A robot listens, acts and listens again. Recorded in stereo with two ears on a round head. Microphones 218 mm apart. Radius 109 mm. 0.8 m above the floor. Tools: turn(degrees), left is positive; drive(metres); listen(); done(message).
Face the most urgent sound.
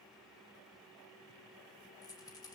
listen()
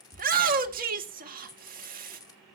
turn(degrees=-40)
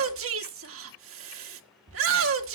turn(degrees=-95)
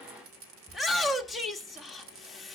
done("Found it: a shout, straight ahead.")